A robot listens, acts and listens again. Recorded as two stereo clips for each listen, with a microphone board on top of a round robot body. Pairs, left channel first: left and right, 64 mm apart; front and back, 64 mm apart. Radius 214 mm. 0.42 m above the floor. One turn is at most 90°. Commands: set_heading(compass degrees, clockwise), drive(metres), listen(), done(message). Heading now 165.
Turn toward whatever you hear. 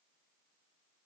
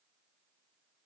listen()
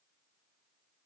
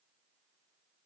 listen()
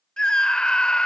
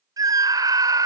set_heading(75)
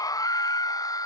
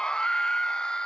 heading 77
set_heading(357)
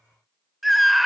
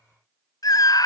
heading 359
done("Facing the scream.")